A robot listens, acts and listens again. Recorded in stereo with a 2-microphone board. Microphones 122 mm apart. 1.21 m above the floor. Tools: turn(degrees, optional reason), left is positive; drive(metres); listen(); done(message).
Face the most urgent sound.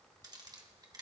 listen()
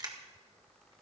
listen()
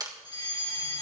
turn(degrees=40, reason="The fire alarm: about 40° left or 140° left.")
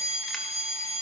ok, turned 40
turn(degrees=100, reason="So it is at 100° left.")
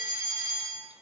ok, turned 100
turn(degrees=-25, reason="The fire alarm is now 25° right.")
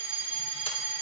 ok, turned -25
turn(degrees=-15, reason="The fire alarm is now 15° right.")
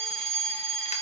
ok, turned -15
done("Found it: a fire alarm, straight ahead, over 4 m away.")